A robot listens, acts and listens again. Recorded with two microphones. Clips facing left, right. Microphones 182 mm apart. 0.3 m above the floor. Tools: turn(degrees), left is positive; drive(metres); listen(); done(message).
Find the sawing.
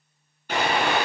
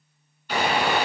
turn(degrees=45)
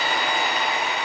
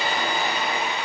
turn(degrees=85)
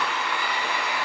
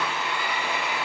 turn(degrees=-25)
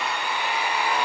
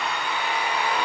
turn(degrees=10)
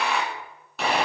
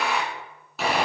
done("Facing the sawing.")